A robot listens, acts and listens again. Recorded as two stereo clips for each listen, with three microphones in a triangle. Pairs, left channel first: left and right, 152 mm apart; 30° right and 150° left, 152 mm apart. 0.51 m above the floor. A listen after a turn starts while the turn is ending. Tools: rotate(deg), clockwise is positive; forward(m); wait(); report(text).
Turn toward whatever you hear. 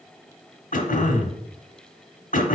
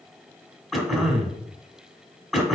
rotate(-60)
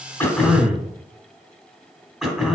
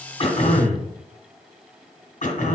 report("Facing the throat clearing.")